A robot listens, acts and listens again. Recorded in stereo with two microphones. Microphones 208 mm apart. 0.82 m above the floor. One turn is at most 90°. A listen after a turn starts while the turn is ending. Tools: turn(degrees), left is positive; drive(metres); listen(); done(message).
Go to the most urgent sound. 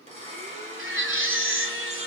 turn(degrees=-90)
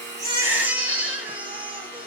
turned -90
turn(degrees=-10)
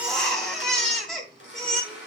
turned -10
drive(metres=1.0)
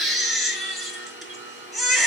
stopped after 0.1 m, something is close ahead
done("Something is in my way. I am facing the baby crying but have not reached it.")